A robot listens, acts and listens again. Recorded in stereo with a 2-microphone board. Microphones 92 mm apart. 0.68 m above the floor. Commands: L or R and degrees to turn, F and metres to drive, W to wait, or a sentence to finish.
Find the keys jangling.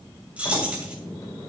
R30
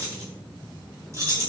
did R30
R145
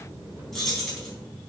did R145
Found it: keys jangling, straight ahead.